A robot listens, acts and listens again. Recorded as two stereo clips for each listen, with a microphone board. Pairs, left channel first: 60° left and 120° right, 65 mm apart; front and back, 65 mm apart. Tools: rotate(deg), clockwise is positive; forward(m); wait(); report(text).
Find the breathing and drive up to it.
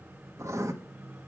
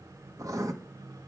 wait()
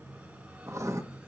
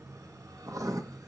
wait()
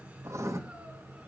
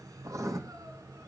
report("I can't make out breathing, only writing.")